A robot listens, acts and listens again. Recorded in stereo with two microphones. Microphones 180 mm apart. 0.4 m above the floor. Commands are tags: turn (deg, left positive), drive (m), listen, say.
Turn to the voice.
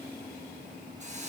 <listen/>
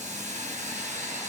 <listen/>
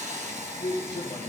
<turn deg="35"/>
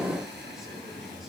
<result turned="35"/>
<say>Found it: a man speaking, straight ahead, over 4 m away.</say>